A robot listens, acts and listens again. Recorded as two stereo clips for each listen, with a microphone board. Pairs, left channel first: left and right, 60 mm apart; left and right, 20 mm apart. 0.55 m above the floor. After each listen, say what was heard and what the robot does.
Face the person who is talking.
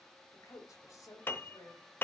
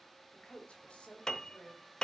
The woman speaking: about 70° left or 110° left. Turn 70° left.
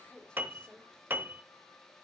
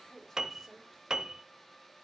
So it is at 20° left. Turn 20° left.
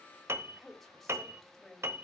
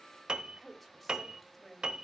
Found it: a woman speaking, straight ahead.